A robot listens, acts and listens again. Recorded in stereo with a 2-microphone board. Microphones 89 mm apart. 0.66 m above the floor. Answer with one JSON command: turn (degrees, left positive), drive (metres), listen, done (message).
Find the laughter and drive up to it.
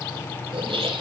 {"turn": -90}
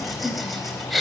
{"drive": 1.0}
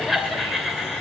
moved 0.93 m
{"drive": 1.0}
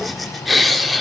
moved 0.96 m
{"drive": 1.0}
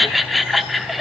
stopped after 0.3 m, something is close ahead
{"done": "Arrived at the laughter, straight ahead."}